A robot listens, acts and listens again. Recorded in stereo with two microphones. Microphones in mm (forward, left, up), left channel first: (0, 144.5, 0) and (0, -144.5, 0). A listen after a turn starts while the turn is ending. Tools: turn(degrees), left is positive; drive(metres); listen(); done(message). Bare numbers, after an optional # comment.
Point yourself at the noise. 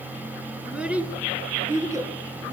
turn(-30)
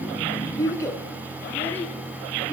done("Facing the child speaking, over 4 m away.")